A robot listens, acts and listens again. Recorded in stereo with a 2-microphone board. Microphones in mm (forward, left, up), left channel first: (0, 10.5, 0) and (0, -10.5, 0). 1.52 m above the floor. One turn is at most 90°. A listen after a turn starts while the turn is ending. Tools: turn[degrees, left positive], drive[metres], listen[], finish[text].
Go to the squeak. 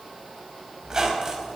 Thought: The squeak: about 30° right or 150° right.
Action: turn[-30]
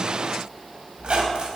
Thought: So it is at 115° right.
Action: turn[-90]
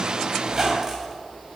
Thought: The squeak is now 25° right.
Action: turn[-25]
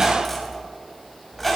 Action: drive[1.0]
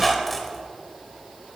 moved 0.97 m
Action: drive[1.0]
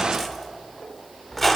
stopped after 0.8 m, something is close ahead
Thought: The squeak is now 10° left.
Action: turn[10]
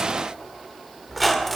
Action: finish[Arrived at the squeak, straight ahead.]